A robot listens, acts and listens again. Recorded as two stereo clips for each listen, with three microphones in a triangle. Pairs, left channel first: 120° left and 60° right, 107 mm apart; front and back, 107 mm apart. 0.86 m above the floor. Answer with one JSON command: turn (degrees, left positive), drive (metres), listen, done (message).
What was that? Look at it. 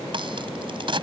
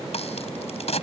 {"turn": -20}
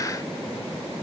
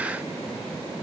{"done": "I heard a crack from this way, but can't make it out now."}